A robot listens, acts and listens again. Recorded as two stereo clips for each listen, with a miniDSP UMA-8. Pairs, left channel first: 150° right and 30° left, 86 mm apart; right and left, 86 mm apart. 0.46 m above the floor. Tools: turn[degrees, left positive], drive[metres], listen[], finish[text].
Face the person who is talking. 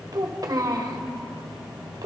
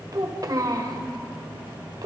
Thought: The child speaking: 60° left.
Action: turn[60]
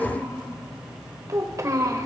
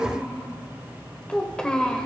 Thought: The child speaking is now 10° right.
Action: turn[-10]
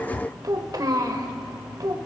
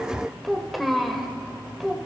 Action: finish[Facing the child speaking.]